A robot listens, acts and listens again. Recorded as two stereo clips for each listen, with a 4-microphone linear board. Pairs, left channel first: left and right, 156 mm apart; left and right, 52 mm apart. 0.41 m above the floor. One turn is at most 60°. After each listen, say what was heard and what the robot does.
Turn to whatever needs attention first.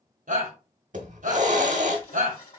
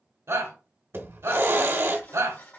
The shout: about 65° right or 115° right. Turn 60° right.
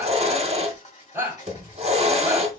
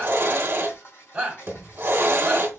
So it is at 15° right. Turn 15° right.
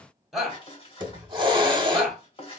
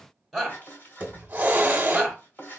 Facing the shout.